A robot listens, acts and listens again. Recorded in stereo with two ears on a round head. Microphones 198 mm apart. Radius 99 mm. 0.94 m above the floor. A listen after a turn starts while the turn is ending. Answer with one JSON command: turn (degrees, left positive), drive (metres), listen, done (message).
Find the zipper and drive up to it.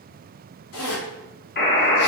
{"turn": 70}
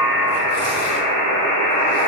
{"listen": true}
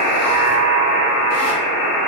{"listen": true}
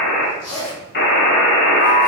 {"turn": 20}
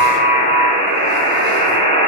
{"listen": true}
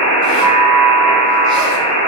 {"listen": true}
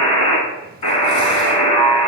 {"done": "Facing where the zipper came from. I can't hear it now. I did not reach it."}